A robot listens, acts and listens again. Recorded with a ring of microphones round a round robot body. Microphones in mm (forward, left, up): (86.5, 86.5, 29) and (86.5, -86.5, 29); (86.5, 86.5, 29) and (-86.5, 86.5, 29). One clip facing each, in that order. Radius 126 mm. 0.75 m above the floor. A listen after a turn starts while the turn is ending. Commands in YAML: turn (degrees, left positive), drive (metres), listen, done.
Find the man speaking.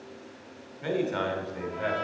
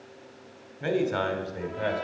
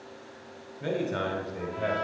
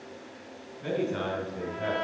turn: -40
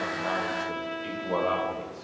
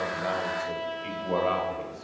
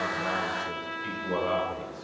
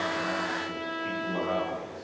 done: "Facing the man speaking, 2 to 4 m away."